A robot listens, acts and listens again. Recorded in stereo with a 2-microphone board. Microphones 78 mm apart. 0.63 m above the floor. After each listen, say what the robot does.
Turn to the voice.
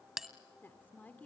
Turn 20° left.
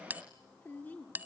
Turn 20° left.
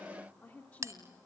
Turn 20° left.
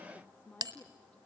Turn 20° left.
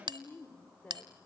Turn 20° left.
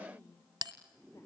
Turn 40° left.
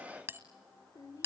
Turn 110° left.
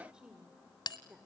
Turn 10° right.
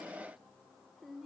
Facing the woman speaking.